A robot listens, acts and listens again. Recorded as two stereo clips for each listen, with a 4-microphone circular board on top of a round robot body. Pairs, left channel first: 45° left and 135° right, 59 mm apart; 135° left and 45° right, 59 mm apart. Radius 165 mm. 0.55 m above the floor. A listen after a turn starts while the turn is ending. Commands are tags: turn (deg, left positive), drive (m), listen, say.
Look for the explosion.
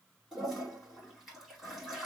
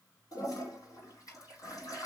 <listen/>
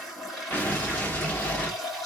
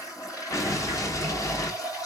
<turn deg="110"/>
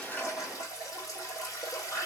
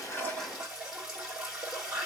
<say>Facing where the explosion came from. I can't hear it now.</say>